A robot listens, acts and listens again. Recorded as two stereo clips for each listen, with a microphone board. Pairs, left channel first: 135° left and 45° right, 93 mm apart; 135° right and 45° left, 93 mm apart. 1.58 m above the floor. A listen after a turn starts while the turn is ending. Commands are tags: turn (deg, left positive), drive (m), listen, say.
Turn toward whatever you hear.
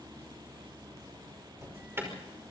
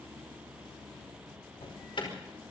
<turn deg="-110"/>
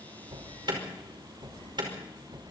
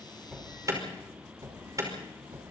<turn deg="-10"/>
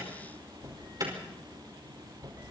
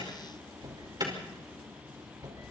<say>Facing the alarm, over 4 m away.</say>